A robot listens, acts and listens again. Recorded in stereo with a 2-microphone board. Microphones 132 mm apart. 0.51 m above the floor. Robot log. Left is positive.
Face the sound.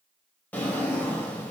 cmd yaw +30
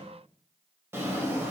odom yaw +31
note: So it is at 20° right.
cmd yaw -20
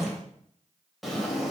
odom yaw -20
end: Facing the drawer, under 1 m away.